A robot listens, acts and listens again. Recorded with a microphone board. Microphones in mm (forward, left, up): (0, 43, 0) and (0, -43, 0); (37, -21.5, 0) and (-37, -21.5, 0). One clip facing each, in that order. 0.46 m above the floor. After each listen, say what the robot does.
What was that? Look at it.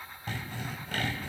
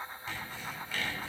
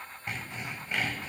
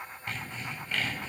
Turn 70° left.
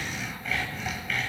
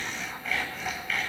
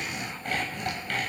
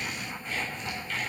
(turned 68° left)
Facing the sawing.